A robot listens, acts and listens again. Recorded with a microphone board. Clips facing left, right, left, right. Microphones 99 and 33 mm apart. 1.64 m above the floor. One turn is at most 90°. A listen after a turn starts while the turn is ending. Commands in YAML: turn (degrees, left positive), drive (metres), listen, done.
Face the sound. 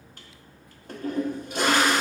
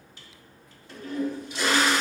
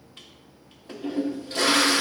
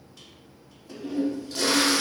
turn: 50
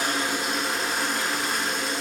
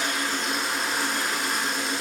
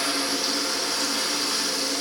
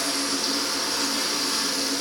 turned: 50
done: "Found it: a toilet flushing, straight ahead."